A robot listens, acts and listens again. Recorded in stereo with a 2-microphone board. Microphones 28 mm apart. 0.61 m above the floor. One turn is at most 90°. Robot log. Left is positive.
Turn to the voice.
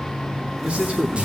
note: The man speaking: about 50° right or 130° right.
cmd yaw -50
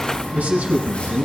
note: So it is at 80° right.
cmd yaw -80
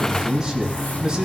note: The man speaking is now 25° right.
cmd yaw -25
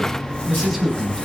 end: Facing the man speaking.